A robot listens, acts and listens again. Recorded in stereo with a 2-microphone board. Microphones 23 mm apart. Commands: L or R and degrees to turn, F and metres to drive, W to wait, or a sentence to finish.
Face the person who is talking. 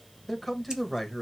L30
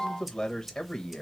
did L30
L150
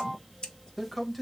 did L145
Facing the man speaking, under 1 m away.